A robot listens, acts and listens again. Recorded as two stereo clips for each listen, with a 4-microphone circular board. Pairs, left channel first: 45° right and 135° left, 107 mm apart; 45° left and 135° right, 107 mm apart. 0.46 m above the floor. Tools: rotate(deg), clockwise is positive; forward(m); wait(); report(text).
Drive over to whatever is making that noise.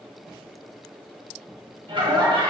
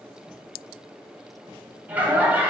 rotate(-155)
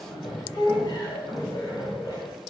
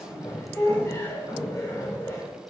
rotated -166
rotate(10)
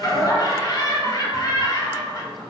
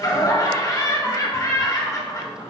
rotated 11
forward(1.0)
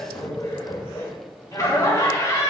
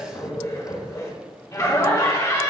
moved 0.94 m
forward(1.0)
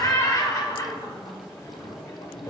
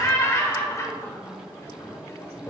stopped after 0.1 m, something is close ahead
report("I am next to the laughter.")